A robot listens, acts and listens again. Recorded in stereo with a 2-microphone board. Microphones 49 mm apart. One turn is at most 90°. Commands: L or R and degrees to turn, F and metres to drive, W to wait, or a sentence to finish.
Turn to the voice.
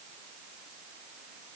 W
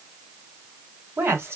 R65
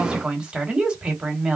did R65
R25
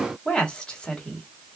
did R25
L15
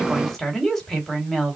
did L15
Facing the woman speaking, 1 to 2 m away.